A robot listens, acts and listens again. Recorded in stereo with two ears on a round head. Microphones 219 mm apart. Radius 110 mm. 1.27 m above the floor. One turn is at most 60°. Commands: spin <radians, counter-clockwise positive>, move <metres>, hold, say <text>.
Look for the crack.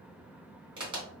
spin -0.35
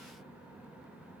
hold
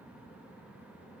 say I heard a crack, but can't make it out now. It was about straight ahead or 140° right.